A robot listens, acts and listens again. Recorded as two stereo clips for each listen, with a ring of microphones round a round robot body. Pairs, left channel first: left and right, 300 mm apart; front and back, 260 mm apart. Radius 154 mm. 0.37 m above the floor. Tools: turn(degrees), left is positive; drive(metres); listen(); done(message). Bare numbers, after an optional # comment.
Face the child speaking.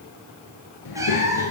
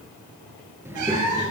# The child speaking: 100° left.
turn(100)
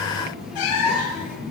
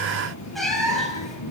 done("Found it: a child speaking, straight ahead, over 4 m away.")